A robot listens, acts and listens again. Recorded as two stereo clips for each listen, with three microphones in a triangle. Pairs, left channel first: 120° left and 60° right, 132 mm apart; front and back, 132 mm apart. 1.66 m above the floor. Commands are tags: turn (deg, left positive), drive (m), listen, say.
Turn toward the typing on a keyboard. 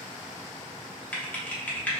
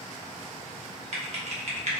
<turn deg="-165"/>
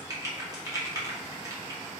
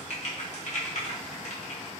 <say>Found it: typing on a keyboard, straight ahead, under 1 m away.</say>